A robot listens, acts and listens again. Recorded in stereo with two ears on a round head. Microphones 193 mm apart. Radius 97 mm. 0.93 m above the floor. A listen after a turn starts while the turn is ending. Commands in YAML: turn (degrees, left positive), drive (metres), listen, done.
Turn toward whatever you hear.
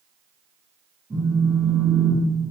turn: -30
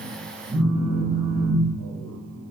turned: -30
turn: -145
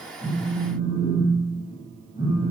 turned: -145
turn: 40
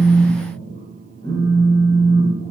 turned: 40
turn: 15
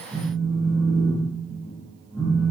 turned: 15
done: "Facing the phone buzzing, 1 to 2 m away."